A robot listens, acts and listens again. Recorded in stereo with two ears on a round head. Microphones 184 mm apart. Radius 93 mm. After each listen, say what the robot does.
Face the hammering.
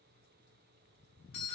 Keep listening.
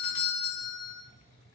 Keep listening.
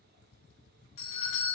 I can't make out hammering, only a doorbell.